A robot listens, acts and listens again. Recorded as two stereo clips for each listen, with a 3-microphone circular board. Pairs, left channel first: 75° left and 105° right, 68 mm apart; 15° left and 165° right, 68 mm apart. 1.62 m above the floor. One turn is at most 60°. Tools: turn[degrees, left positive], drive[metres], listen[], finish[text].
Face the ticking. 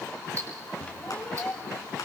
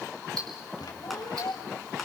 Thought: The ticking: 145° right.
Action: turn[-60]
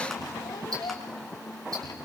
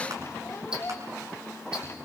Thought: Nothing new. It was at 85° right.
Action: turn[-60]
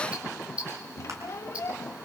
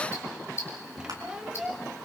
Thought: The ticking is now 35° right.
Action: turn[-35]
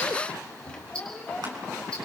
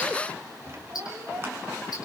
Action: finish[Facing the ticking.]